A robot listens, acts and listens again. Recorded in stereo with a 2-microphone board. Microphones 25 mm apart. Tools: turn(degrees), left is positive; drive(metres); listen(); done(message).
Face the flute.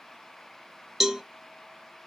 listen()
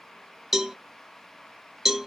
listen()
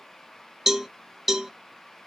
done("I can't make out a flute to turn to.")